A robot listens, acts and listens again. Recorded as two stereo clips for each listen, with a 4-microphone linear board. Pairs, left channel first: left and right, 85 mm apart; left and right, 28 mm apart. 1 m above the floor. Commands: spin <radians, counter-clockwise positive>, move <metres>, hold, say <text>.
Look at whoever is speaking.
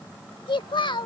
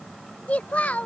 spin 1.13
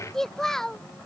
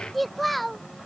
say Facing the child speaking.